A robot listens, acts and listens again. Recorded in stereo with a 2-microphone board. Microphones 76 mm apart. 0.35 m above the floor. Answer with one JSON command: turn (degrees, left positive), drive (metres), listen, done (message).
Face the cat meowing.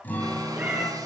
{"turn": -20}
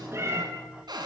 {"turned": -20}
{"turn": -145}
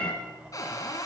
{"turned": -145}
{"turn": 15}
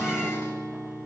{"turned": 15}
{"listen": true}
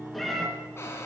{"done": "Facing the cat meowing, 2 to 4 m away."}